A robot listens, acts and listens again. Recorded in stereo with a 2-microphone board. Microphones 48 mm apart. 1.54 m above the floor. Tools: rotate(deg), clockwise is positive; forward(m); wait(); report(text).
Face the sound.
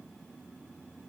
wait()
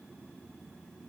wait()
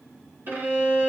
rotate(55)
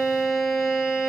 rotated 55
rotate(10)
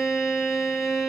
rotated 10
report("Found it: a violin, straight ahead, 1 to 2 m away.")